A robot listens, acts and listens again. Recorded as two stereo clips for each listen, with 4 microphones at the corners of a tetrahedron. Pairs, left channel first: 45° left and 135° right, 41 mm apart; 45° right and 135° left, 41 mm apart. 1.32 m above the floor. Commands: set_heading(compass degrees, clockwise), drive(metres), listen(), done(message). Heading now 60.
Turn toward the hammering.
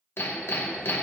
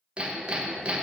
set_heading(350)
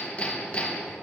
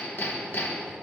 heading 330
set_heading(345)
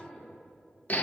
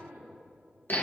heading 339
done("Facing the hammering, under 1 m away.")